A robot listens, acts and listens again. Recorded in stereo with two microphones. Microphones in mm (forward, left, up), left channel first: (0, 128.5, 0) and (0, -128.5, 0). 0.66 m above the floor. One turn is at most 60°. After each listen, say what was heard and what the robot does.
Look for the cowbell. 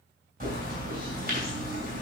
Keep listening.
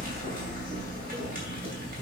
Keep listening.
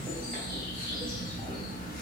I can't make out a cowbell to turn to.